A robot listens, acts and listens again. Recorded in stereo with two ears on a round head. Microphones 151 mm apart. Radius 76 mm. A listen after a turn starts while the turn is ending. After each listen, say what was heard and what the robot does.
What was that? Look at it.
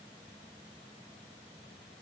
Keep listening.
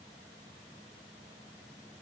Keep listening.
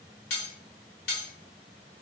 The cutlery clinking: about 65° left or 115° left. Turn 65° left.
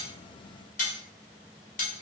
So it is at 45° left. Turn 45° left.
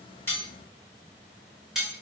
Facing the cutlery clinking, 1 to 2 m away.